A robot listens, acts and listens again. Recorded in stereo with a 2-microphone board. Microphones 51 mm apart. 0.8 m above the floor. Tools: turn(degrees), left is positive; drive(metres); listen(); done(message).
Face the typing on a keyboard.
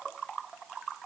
listen()
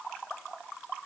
listen()
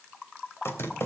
turn(degrees=55)
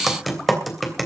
done("Facing the typing on a keyboard, 2 to 4 m away.")